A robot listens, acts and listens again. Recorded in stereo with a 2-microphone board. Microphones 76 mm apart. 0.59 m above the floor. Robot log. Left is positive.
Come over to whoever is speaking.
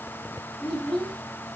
cmd yaw +30
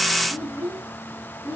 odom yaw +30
note: So it is at 25° right.
cmd yaw -25
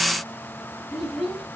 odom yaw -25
cmd fwd 1.0
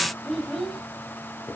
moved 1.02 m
cmd fwd 1.0
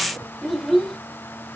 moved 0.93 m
cmd fwd 1.0
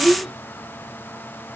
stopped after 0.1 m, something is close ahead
end: Arrived at the child speaking, straight ahead.